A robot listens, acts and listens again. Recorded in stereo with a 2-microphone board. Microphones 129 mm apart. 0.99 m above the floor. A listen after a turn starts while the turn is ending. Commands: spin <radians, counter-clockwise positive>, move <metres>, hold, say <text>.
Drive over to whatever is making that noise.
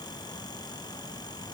hold
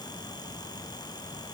hold
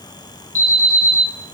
spin -1.22
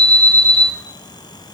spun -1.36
move 1.0
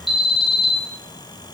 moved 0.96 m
move 1.0
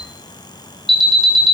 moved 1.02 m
move 1.0
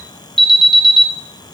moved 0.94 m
move 1.0
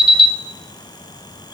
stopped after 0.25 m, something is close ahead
say Arrived at the alarm, straight ahead.